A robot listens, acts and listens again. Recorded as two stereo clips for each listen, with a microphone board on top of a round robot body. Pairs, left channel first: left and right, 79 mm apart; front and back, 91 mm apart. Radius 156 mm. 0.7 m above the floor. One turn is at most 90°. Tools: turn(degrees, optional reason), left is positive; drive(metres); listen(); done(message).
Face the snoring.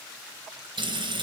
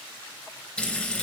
listen()
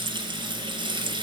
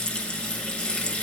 listen()
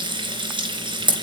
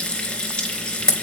done("I can't make out snoring to turn to.")